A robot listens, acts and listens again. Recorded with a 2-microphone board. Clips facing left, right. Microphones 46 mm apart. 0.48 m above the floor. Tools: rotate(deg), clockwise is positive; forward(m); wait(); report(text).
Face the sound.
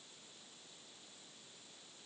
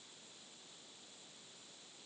wait()
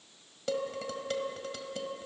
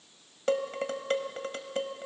rotate(40)
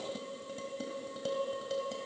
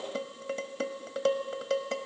rotate(100)
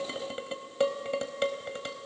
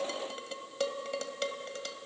rotate(-20)
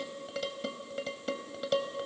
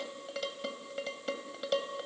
report("Facing the dishes clattering, 1 to 2 m away.")